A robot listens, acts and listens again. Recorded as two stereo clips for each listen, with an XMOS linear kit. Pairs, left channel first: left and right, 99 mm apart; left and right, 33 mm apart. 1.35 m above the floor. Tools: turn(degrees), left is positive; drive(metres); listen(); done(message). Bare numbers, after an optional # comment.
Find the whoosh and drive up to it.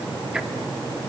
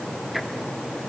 listen()
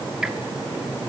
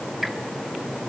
listen()
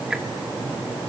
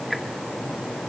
done("I can't make out a whoosh.")